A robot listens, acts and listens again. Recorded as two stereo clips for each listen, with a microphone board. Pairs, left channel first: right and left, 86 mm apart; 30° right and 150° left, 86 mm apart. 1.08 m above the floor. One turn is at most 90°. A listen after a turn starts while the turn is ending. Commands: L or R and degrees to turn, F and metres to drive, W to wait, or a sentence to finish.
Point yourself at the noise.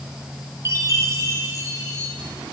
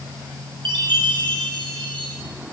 L90
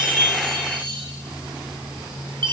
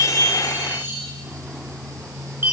L85
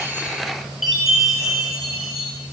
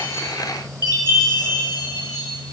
Found it: a chime, straight ahead, 2 to 4 m away.